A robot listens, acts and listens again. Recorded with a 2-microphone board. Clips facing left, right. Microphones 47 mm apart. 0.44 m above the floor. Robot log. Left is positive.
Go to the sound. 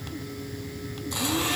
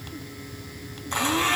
note: The blender: about 45° right or 135° right.
cmd yaw -45
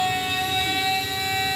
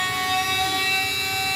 note: So it is at 90° right.
cmd yaw -90
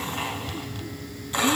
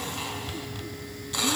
note: The blender is now 25° left.
cmd yaw +25
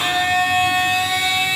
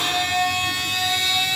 note: The blender is now 20° left.
cmd yaw +20
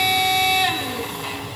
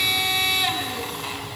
cmd fwd 1.0
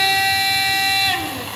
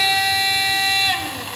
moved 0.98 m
cmd fwd 1.0
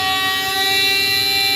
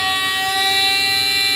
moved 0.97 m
note: The blender is now 10° right.
cmd yaw -10
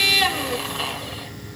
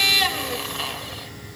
cmd fwd 1.0
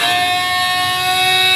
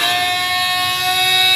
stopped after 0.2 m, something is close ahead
end: I am next to the blender.